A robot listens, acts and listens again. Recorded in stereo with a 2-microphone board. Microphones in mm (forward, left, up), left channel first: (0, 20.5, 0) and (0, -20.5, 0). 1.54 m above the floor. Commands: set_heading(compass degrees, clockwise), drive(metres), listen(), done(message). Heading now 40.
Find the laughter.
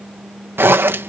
listen()
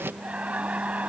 set_heading(75)
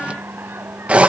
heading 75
listen()
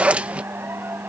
set_heading(180)
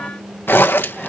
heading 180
listen()
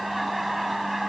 done("Found it: laughter, straight ahead.")